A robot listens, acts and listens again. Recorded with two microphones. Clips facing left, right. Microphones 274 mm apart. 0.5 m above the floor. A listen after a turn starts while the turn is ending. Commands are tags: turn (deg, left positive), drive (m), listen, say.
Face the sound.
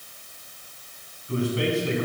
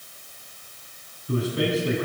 <turn deg="-40"/>
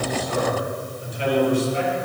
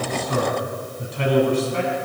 <turn deg="-115"/>
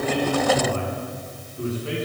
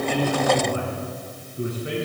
<turn deg="-15"/>
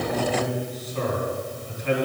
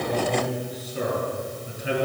<turn deg="-10"/>
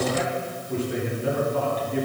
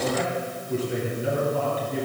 <say>Found it: a man speaking, straight ahead, over 4 m away.</say>